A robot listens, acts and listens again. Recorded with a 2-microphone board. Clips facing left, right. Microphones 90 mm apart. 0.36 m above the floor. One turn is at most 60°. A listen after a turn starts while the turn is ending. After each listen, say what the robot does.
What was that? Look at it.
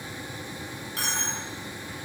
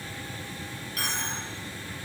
Turn 30° left.
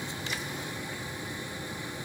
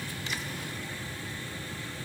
Keep listening.
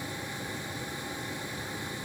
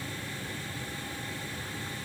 I heard a dropped coin, but can't make it out now. It was about straight ahead or 120° left.